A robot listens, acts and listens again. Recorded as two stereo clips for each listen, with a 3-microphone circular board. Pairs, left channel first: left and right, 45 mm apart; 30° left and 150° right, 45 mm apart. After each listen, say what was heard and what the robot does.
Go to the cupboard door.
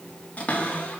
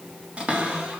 The cupboard door: 145° left. Turn 145° left.
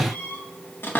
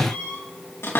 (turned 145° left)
The cupboard door is now 50° left. Turn 50° left.
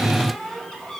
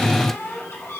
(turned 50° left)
The cupboard door is now 10° left. Turn 10° left.
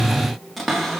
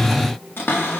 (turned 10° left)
Drive 1.0 m forward.
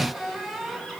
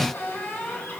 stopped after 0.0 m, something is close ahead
Something is in my way. I am facing the cupboard door but have not reached it.